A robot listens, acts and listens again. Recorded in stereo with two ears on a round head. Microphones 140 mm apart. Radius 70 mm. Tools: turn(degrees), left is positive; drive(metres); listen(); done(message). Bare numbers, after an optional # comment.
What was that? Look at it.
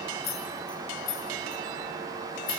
# The keys jangling: about 65° left or 115° left.
turn(65)
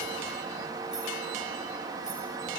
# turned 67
listen()
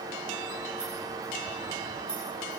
listen()
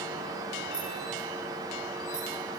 done("I heard keys jangling, but can't make it out now. It was about 5° right or 50° left.")